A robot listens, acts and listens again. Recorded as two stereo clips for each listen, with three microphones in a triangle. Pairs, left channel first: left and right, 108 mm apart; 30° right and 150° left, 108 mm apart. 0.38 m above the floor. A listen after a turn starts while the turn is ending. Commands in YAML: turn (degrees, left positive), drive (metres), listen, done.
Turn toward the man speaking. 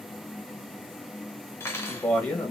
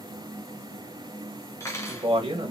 turn: 160
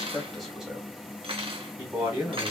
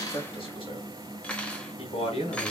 turn: -20
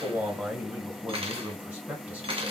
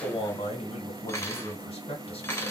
turn: -10
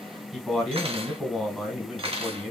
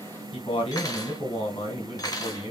done: "Found it: a man speaking, straight ahead."